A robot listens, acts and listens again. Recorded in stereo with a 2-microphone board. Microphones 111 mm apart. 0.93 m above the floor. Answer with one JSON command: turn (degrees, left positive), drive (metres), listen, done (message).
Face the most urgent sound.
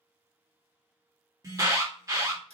{"turn": -30}
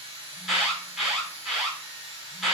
{"done": "Found it: an alarm, straight ahead, 1 to 2 m away."}